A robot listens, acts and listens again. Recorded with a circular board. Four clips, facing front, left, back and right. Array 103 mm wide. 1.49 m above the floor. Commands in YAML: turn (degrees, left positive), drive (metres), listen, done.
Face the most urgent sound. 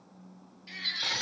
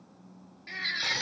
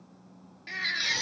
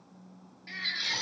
turn: 165
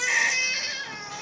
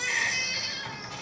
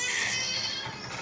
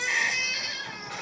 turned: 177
turn: -10
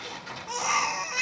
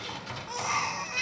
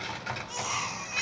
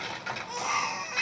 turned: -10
done: "Facing the baby crying, 1 to 2 m away."